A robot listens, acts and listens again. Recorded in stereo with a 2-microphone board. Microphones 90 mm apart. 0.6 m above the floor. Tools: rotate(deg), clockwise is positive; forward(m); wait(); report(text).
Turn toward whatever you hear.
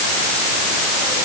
wait()
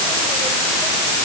wait()
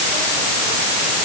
report("I can't make out anything.")